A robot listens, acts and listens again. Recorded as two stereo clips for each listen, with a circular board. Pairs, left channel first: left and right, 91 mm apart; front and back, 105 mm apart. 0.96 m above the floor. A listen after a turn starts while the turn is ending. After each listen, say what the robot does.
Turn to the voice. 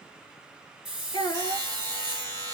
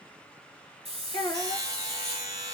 Turn 50° left.
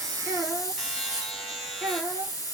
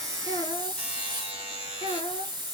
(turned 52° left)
Found it: a child speaking, straight ahead.